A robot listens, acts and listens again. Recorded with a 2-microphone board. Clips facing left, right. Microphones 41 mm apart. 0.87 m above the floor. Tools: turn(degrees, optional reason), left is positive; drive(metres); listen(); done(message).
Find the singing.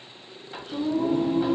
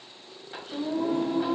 turn(degrees=-35, reason="The singing: about 35° right or 145° right.")
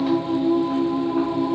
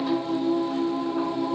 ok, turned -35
done("Found it: singing, straight ahead, 1 to 2 m away.")